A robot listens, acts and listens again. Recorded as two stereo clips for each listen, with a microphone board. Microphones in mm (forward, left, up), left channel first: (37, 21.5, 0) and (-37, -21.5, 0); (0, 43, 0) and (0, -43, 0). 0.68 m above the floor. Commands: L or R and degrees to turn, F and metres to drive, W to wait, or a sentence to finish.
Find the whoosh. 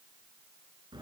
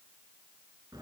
W
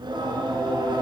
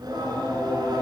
W
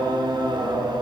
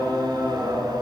I can't make out a whoosh, only singing.